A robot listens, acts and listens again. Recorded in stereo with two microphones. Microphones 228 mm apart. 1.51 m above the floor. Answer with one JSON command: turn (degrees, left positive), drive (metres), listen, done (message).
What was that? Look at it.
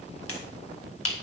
{"turn": 90}
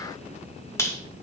{"turn": 10}
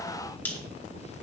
{"done": "Found it: a finger snap, straight ahead, 2 to 4 m away."}